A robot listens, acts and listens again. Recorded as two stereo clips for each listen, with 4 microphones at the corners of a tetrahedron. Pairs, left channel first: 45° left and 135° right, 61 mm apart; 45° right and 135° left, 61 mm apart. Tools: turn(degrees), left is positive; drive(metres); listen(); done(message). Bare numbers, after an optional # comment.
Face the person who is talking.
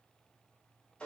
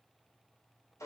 listen()
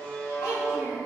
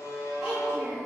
# The child speaking: 60° left.
turn(60)
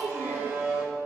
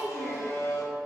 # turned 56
# The child speaking is now 15° left.
turn(15)
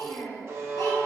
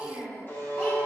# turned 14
# The child speaking is now 15° left.
turn(15)
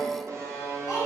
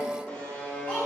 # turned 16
listen()
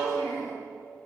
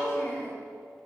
# The child speaking is now 20° left.
turn(20)
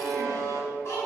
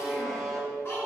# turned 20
done("Facing the child speaking, 2 to 4 m away.")